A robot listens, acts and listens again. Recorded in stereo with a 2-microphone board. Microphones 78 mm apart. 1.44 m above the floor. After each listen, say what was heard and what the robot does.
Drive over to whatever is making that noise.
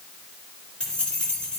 Turn 30° left.
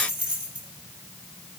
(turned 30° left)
So it is at 20° right. Turn 20° right.
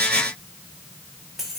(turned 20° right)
Drive 1.0 m forward.
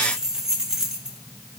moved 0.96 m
The keys jangling is now 10° right. Turn 10° right.
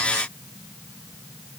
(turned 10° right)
Keep listening.
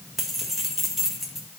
Drive 1.0 m forward.
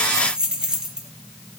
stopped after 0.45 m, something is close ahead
The keys jangling is now 15° right. Turn 15° right.
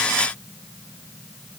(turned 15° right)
Keep listening.
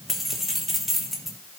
I am next to the keys jangling.